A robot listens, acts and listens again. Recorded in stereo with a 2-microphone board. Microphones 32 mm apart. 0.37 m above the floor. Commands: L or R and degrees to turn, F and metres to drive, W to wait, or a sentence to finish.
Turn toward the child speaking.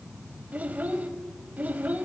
R60
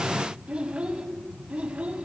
R40
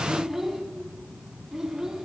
R15
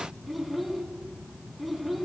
Facing the child speaking.